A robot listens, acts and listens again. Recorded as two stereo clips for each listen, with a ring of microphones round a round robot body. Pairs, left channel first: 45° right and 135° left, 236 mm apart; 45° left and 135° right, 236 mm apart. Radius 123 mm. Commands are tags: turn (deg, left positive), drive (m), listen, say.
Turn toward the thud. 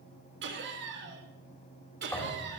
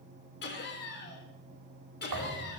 <turn deg="-125"/>
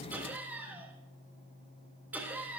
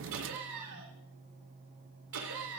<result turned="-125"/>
<say>I heard a thud from this way, but can't make it out now.</say>